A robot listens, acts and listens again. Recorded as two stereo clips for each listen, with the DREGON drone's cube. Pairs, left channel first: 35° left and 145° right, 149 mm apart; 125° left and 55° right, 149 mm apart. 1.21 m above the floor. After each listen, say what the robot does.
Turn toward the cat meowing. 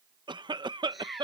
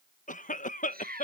Turn 55° right.
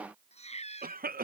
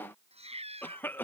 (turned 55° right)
Turn 10° right.
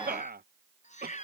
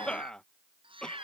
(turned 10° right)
Facing the cat meowing.